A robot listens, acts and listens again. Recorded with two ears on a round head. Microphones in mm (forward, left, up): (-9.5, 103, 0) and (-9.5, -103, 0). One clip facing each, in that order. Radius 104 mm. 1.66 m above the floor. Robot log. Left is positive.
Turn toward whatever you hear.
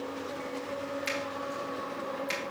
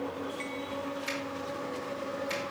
cmd yaw +90
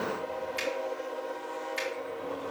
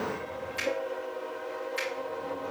end: Facing the finger snap, 2 to 4 m away.